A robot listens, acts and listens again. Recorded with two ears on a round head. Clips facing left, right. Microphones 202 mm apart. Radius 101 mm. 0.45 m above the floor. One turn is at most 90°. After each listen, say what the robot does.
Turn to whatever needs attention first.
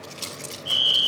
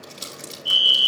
Turn 45° right.
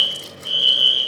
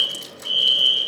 Turn 10° right.
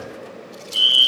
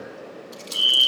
Facing the fire alarm.